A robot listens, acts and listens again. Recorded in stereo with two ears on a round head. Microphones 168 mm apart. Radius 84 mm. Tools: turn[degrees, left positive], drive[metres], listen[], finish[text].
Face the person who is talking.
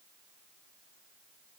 Action: listen[]
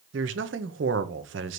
Thought: The man speaking: about 70° right or 110° right.
Action: turn[-70]
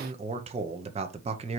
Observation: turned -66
Thought: So it is at 35° right.
Action: turn[-35]
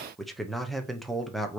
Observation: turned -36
Action: finish[Found it: a man speaking, straight ahead, under 1 m away.]